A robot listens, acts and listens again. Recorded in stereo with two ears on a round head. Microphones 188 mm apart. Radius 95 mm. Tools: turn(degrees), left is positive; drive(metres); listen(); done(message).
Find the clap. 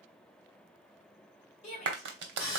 turn(degrees=-60)
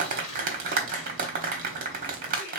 turn(degrees=-45)
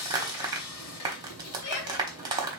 turn(degrees=-20)
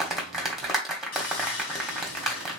done("Found it: a clap, straight ahead.")